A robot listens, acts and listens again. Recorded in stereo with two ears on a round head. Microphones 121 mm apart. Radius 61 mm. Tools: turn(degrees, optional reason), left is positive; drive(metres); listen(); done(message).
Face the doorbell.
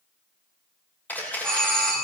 turn(degrees=30)
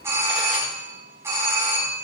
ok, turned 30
turn(degrees=-20, reason="So it is at 20° right.")
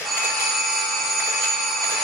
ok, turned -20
done("Facing the doorbell.")